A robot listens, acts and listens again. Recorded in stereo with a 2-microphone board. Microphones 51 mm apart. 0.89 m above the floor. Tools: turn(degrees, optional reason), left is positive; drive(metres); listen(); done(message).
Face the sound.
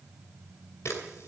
turn(degrees=70, reason="The camera shutter: about 70° left or 110° left.")
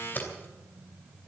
turn(degrees=40, reason="So it is at 40° left.")
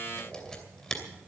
turn(degrees=10, reason="The camera shutter is now 10° left.")
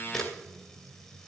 done("Found it: a camera shutter, straight ahead, 2 to 4 m away.")